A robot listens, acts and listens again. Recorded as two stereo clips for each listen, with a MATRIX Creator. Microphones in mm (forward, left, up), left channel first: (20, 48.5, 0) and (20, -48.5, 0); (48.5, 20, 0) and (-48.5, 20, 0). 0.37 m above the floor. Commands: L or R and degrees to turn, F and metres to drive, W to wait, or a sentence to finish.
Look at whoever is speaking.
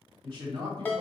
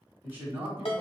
R115
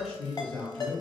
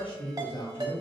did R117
Found it: a man speaking, straight ahead.